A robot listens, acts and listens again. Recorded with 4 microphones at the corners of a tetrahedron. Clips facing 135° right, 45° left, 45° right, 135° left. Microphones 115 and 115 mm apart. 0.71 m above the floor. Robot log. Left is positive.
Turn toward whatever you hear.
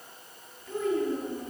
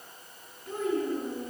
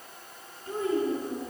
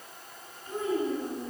note: The child speaking: 10° left.
cmd yaw +10
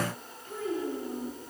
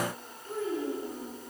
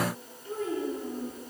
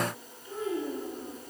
end: Found it: a child speaking, straight ahead, over 4 m away.